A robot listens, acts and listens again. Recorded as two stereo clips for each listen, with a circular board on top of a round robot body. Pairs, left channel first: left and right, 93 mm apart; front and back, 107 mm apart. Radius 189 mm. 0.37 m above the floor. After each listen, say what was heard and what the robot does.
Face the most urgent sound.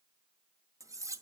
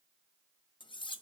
Keep listening.
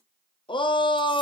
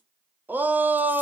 The shout: 105° left. Turn 105° left.
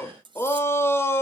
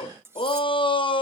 The shout is now 30° left. Turn 30° left.
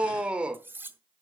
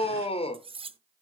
The shout is now 10° right. Turn 10° right.
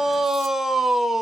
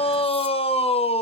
Facing the shout, 1 to 2 m away.